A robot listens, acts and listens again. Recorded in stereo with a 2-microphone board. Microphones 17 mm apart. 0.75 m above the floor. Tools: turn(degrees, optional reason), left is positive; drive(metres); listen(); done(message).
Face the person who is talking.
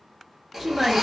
turn(degrees=-30)
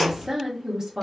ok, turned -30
turn(degrees=-145, reason="So it is at 145° right.")
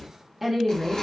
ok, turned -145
turn(degrees=-20, reason="The woman speaking is now 20° right.")
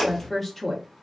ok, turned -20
done("Facing the woman speaking, under 1 m away.")